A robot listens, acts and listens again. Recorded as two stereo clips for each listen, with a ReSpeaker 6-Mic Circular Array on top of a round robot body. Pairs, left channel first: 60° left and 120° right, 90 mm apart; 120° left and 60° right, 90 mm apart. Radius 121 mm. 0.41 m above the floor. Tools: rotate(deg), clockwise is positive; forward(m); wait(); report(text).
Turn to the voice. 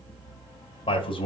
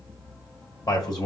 rotate(-75)
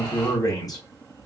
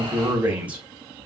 rotate(-10)
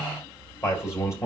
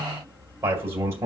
report("Found it: a man speaking, straight ahead.")